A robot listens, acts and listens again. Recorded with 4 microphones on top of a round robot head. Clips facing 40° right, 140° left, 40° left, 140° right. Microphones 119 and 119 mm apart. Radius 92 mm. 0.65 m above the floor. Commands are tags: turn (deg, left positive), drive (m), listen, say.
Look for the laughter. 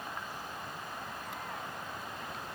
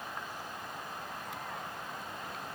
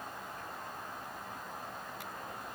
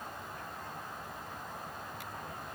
<listen/>
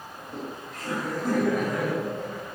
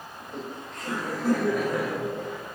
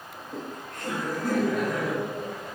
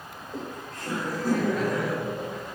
<turn deg="70"/>
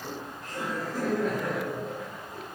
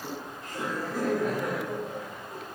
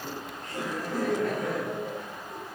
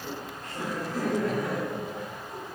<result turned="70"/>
<turn deg="65"/>
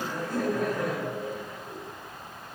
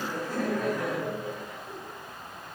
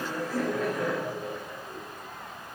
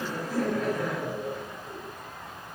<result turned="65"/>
<say>Facing the laughter.</say>